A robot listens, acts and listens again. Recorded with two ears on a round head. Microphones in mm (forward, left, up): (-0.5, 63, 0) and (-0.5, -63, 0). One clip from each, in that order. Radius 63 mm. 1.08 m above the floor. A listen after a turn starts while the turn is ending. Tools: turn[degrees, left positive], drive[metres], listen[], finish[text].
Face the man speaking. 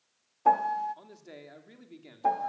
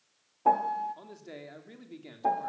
Action: turn[30]
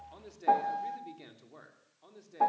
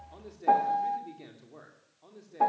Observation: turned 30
Thought: So it is at 160° left.
Action: turn[160]
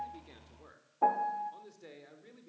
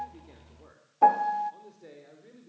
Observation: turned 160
Thought: The man speaking is now 40° left.
Action: turn[40]
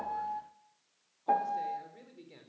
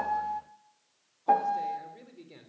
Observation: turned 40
Action: finish[Found it: a man speaking, straight ahead, over 4 m away.]